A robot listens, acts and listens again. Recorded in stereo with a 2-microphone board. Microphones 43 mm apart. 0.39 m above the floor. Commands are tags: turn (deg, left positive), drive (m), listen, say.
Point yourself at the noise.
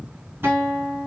<turn deg="-70"/>
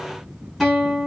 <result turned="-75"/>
<say>Found it: a guitar, straight ahead, 1 to 2 m away.</say>